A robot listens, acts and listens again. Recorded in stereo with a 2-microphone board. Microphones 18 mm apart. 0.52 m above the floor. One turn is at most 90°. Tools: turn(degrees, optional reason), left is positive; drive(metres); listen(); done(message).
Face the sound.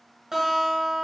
turn(degrees=-20, reason="The guitar: about 20° right or 160° right.")
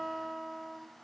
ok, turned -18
turn(degrees=-90, reason="So it is at 140° right.")
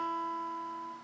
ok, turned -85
turn(degrees=-55, reason="The guitar is now 55° right.")
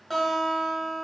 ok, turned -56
done("Found it: a guitar, straight ahead.")